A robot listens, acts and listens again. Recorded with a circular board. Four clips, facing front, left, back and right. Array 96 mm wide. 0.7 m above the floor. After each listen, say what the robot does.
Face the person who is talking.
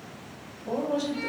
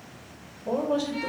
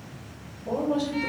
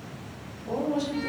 Turn 100° left.
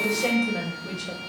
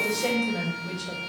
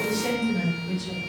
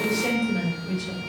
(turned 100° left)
Turn 25° left.
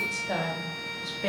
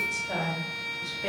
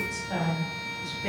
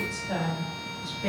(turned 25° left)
Turn 10° left.
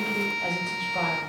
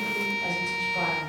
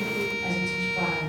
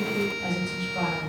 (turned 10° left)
Facing the woman speaking.